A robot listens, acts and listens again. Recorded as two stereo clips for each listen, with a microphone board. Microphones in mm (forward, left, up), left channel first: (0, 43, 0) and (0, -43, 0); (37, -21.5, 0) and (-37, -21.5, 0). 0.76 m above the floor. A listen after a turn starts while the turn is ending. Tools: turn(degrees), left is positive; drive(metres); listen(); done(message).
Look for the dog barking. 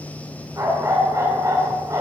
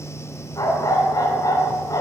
turn(degrees=-40)
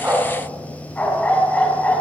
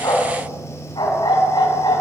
turn(degrees=15)
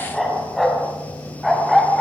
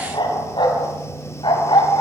done("Found it: a dog barking, straight ahead.")